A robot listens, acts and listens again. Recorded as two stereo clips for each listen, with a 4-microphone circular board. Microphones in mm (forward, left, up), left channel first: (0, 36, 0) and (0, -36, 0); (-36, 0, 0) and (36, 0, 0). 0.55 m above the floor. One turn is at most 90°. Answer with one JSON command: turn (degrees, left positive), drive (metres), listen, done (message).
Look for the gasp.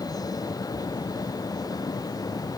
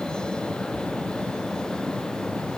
{"listen": true}
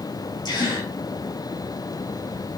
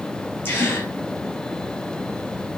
{"turn": 90}
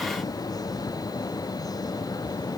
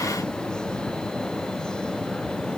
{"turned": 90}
{"turn": 30}
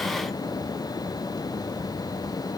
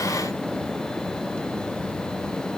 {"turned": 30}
{"done": "Facing where the gasp came from. I can't hear it now."}